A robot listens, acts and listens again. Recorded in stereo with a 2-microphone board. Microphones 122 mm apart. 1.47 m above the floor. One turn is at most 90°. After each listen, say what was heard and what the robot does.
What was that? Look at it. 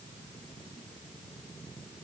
Keep listening.
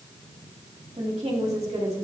The woman speaking: about 55° right or 125° right. Turn 55° right.
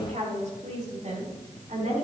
So it is at 85° right. Turn 85° right.
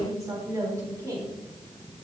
The woman speaking is now 25° right. Turn 25° right.
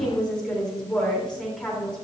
Found it: a woman speaking, straight ahead, 2 to 4 m away.